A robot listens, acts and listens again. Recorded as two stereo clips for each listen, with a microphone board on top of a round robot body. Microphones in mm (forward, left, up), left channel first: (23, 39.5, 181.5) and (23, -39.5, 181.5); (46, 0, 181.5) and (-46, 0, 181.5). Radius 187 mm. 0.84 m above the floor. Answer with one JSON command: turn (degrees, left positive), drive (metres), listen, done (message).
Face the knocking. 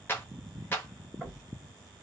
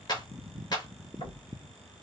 {"done": "Facing the knocking, 2 to 4 m away."}